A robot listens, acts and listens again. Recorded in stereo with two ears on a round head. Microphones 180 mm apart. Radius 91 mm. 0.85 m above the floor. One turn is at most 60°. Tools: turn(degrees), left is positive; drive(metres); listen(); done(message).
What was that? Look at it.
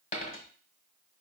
turn(degrees=35)
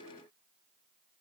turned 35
listen()
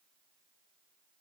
done("I heard a dropped coin, but can't make it out now. It was about straight ahead or 110° left.")